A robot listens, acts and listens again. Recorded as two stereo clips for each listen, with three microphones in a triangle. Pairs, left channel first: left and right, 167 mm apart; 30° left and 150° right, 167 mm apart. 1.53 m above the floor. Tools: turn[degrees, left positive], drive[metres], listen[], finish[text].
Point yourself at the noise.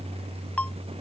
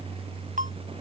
Thought: The ringtone: 170° left.
Action: turn[170]
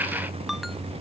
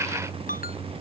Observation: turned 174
Action: finish[Facing the ringtone.]